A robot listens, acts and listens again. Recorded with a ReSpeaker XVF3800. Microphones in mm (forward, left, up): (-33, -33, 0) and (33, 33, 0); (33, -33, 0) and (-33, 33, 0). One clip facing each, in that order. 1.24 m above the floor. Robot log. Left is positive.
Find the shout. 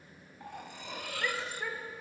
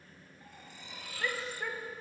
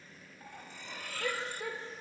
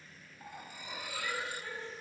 note: The shout: 45° right.
cmd yaw -45
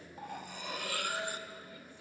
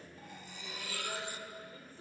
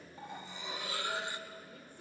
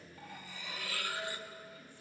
note: The shout is now 10° right.
cmd yaw -10
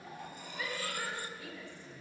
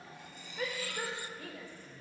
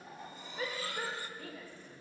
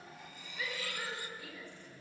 end: Found it: a shout, straight ahead, over 4 m away.